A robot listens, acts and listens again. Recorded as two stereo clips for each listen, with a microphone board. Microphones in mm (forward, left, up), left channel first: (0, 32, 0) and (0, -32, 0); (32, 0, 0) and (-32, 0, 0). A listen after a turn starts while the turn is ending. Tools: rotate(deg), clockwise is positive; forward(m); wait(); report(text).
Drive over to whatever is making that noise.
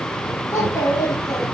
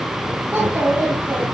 rotate(-120)
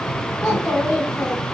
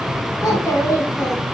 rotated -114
forward(1.0)
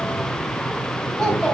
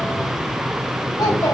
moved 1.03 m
rotate(-10)
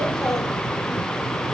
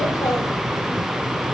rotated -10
forward(1.0)
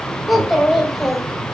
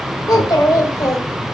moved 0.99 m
forward(1.0)
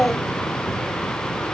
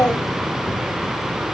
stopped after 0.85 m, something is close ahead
report("Arrived at the child speaking, straight ahead.")